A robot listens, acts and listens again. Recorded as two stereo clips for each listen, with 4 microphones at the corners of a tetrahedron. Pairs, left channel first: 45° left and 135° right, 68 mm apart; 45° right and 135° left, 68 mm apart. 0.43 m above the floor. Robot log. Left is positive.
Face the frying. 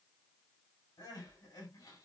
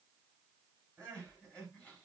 cmd idle
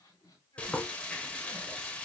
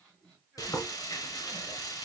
note: The frying: 25° right.
cmd yaw -25
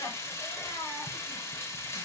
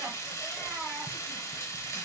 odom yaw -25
end: Facing the frying.